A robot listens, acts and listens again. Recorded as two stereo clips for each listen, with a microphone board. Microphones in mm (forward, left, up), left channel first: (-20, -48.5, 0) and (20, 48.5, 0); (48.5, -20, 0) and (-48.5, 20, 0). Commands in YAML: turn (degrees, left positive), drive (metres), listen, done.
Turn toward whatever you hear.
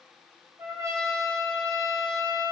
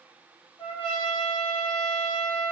done: "Found it: a trumpet, straight ahead."